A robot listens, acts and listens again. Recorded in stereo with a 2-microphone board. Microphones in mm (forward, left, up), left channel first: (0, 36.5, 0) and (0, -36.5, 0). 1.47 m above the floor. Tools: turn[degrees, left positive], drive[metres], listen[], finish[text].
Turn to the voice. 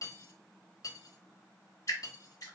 Action: listen[]
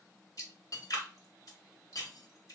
Action: listen[]
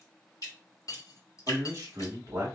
Thought: The man speaking: about 45° right or 135° right.
Action: turn[-45]
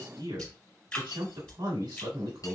Thought: So it is at 85° right.
Action: turn[-85]
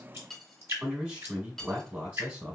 Thought: The man speaking is now 25° right.
Action: turn[-25]
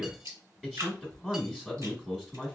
Thought: The man speaking is now 10° right.
Action: turn[-10]
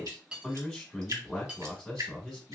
Action: finish[Facing the man speaking.]